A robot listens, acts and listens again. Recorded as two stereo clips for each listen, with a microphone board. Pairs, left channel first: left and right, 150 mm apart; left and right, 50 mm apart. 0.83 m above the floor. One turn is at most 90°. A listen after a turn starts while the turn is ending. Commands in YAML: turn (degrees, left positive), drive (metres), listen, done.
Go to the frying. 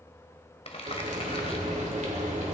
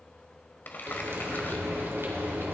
turn: -55
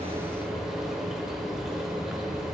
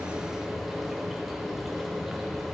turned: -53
drive: 1.0
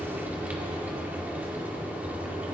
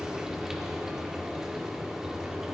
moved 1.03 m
turn: -10
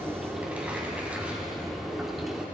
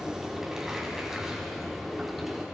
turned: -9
drive: 1.0
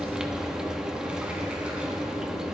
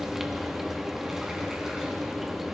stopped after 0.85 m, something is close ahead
done: "Arrived at the frying, straight ahead."